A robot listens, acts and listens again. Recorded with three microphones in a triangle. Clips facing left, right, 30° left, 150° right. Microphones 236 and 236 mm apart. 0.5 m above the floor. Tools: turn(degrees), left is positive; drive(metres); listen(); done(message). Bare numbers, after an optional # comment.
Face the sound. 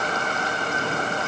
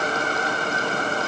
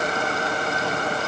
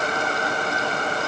listen()
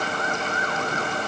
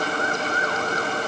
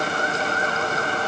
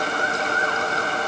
listen()
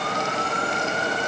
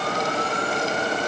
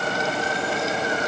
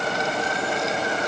done("I can't make out anything.")